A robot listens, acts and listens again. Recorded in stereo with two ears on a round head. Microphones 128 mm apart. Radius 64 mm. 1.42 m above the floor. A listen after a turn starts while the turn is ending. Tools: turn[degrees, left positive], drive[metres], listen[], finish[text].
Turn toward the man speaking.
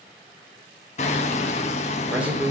Action: turn[-30]
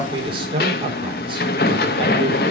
Thought: So it is at 145° right.
Action: turn[-145]
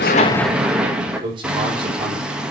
Thought: The man speaking is now 35° right.
Action: turn[-35]
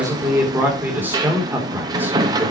Thought: The man speaking is now 15° right.
Action: turn[-15]
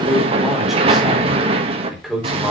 Action: finish[Facing the man speaking.]